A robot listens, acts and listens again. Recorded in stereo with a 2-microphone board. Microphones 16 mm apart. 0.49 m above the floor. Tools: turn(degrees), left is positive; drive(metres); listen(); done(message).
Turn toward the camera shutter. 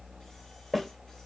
listen()
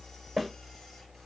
listen()
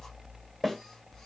done("I can't make out a camera shutter, only a snare drum.")